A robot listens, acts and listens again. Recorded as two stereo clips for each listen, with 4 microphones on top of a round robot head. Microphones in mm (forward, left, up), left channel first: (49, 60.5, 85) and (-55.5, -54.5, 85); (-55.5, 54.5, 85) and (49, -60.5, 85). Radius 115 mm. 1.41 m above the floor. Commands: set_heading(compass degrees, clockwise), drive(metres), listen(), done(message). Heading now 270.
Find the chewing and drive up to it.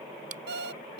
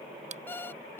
set_heading(5)
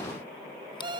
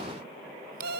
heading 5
listen()
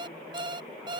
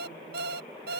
listen()
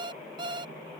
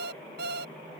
done("I heard chewing from this way, but can't make it out now. I did not reach it.")